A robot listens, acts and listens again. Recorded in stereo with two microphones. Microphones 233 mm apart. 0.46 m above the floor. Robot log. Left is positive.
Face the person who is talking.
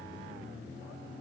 cmd idle
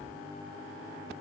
cmd idle
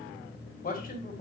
note: The man speaking: about 35° left or 145° left.
cmd yaw +35
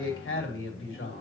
note: So it is at 105° left.
cmd yaw +105
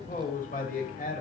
note: The man speaking is now 40° left.
cmd yaw +40
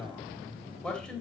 end: Facing the man speaking.